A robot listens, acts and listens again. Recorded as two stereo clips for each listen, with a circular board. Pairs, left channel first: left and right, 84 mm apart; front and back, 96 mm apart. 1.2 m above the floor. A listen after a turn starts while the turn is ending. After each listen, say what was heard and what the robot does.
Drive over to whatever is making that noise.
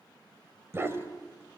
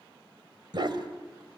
The dog barking: 145° right. Turn 145° right.
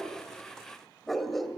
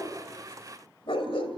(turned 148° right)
Drive 1.0 m forward.
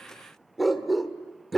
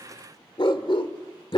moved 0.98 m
Drive 1.0 m forward.
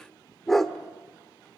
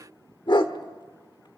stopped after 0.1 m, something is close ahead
I am next to the dog barking.